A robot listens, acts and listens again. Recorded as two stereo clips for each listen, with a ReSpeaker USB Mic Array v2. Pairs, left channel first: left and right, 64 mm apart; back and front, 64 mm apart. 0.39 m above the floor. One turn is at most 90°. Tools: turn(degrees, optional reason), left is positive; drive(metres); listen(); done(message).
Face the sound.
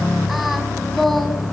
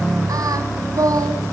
done("Facing the singing, 2 to 4 m away.")